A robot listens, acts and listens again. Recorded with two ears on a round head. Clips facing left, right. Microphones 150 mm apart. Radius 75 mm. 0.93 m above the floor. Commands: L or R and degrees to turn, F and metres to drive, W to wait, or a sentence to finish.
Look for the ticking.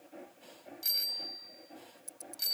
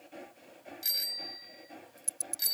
R40
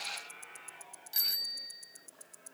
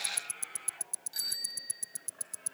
R100
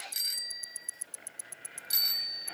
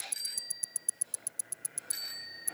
R20
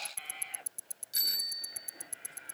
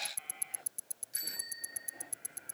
Found it: ticking, straight ahead.